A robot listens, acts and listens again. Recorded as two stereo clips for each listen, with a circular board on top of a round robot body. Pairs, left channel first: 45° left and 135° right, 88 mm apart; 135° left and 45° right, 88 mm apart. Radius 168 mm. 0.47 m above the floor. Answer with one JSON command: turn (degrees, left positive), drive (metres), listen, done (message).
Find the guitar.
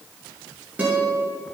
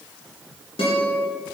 {"turn": 150}
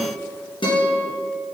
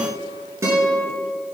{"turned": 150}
{"turn": 15}
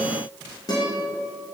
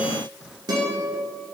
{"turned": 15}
{"done": "Facing the guitar."}